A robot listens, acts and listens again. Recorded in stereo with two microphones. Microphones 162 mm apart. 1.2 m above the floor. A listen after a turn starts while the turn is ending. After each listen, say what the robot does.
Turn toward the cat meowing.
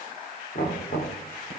Keep listening.
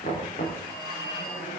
Keep listening.
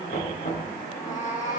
Turn 55° left.
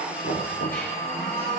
Keep listening.
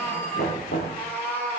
Turn 15° left.
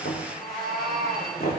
Found it: a cat meowing, straight ahead, over 4 m away.